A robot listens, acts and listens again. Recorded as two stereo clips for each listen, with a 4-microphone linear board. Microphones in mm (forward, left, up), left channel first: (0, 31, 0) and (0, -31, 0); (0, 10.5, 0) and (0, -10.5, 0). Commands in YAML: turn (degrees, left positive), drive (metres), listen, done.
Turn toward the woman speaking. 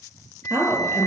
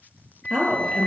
turn: -60
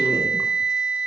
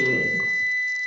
listen: true
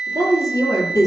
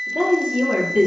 turn: -60
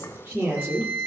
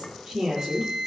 turn: -25
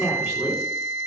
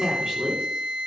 turn: -10
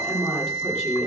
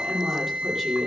done: "Facing the woman speaking, over 4 m away."